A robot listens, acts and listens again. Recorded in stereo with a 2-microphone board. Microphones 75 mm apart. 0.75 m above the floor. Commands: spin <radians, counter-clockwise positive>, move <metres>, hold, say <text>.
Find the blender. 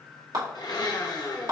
spin 1.13
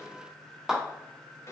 spin 0.70
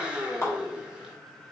spin -0.26
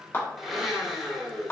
say Found it: a blender, straight ahead.